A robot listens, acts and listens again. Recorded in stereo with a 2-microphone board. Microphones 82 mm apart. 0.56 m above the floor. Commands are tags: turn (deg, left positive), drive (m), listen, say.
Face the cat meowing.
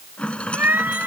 <turn deg="-20"/>
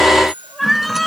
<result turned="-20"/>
<say>Found it: a cat meowing, straight ahead.</say>